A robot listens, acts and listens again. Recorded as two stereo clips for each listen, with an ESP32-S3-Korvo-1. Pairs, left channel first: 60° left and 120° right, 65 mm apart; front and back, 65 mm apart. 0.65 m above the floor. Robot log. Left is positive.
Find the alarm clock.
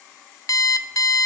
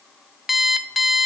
note: The alarm clock: 95° left.
cmd yaw +95
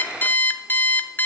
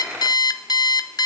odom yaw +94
end: Facing the alarm clock, under 1 m away.